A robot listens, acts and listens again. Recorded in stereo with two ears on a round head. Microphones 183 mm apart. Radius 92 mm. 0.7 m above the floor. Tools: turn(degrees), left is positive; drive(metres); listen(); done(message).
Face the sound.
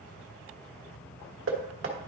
turn(degrees=-70)
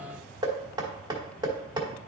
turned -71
turn(degrees=-20)
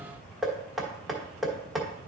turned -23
done("Facing the knocking, 1 to 2 m away.")